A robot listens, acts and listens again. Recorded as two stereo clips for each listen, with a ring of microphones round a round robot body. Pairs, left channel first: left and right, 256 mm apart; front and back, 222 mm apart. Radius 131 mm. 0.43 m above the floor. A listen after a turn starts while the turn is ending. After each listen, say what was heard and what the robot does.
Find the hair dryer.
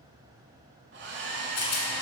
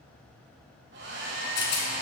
The hair dryer: 135° right. Turn 135° right.
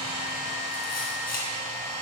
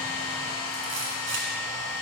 The hair dryer is now 25° right. Turn 25° right.
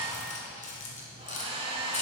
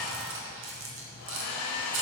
The hair dryer is now 20° right. Turn 20° right.
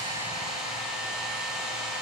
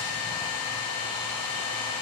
Facing the hair dryer, 1 to 2 m away.